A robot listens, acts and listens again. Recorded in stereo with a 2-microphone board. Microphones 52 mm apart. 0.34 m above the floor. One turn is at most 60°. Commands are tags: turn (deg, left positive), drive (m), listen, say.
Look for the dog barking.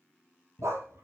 <turn deg="-60"/>
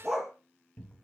<say>Found it: a dog barking, straight ahead, 2 to 4 m away.</say>